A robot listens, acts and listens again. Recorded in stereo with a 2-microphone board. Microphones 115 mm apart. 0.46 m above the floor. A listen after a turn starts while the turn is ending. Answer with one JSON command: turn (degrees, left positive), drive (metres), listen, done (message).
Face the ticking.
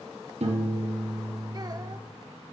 {"listen": true}
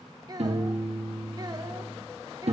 {"listen": true}
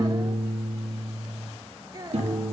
{"done": "I can't make out ticking, only a child speaking and a piano."}